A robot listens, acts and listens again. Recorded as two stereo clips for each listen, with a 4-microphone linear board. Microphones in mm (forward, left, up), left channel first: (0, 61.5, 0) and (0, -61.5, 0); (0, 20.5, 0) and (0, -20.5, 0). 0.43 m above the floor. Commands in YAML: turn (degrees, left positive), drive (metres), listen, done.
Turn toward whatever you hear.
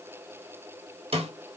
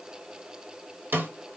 turn: -55
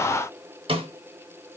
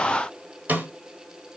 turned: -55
turn: -55
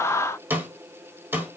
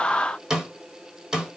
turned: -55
turn: -15
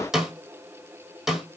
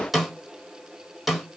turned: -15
done: "Found it: a snare drum, straight ahead."